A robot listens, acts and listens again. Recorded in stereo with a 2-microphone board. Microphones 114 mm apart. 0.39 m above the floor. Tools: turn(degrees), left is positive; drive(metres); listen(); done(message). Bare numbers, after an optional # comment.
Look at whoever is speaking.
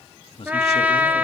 # The man speaking: about 60° left or 120° left.
turn(60)
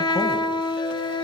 listen()
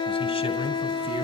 # So it is at 65° left.
turn(65)
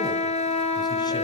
listen()
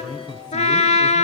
# The man speaking is now 40° left.
turn(40)
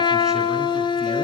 listen()
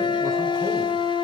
listen()
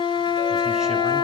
done("Facing where the man speaking came from. I can't hear it now.")